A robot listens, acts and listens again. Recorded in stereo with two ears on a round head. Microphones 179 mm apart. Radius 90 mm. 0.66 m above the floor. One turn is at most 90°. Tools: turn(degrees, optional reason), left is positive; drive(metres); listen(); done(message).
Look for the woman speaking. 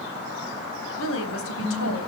turn(degrees=90)
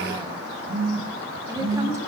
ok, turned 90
turn(degrees=-15, reason="So it is at 15° right.")
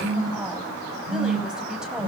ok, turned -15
listen()
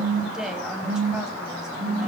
done("Facing the woman speaking.")